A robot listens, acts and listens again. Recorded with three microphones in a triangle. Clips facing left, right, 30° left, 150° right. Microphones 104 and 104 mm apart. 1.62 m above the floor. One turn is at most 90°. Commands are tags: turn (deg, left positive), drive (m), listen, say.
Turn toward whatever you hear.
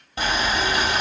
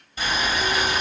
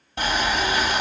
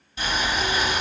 <turn deg="60"/>
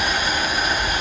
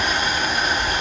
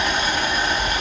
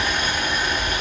<turn deg="10"/>
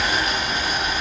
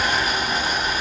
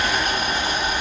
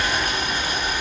<say>Facing the boiling.</say>